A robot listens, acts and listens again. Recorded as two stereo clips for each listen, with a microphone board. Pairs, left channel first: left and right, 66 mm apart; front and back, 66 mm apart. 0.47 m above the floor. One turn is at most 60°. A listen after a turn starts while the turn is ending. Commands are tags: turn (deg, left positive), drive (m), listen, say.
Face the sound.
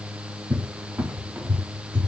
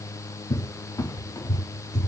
<turn deg="-25"/>
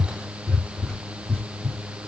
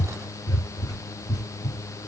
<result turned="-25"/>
<turn deg="10"/>
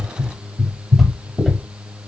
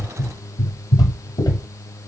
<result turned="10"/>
<say>Found it: a cupboard door, straight ahead.</say>